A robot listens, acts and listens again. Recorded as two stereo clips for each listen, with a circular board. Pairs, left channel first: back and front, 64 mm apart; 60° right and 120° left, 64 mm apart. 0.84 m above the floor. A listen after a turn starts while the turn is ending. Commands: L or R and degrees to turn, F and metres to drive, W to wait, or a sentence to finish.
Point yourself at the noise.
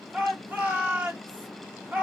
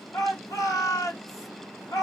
R65
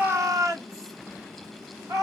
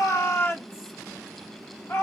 R20
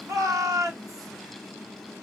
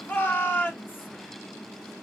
Found it: a shout, straight ahead, 1 to 2 m away.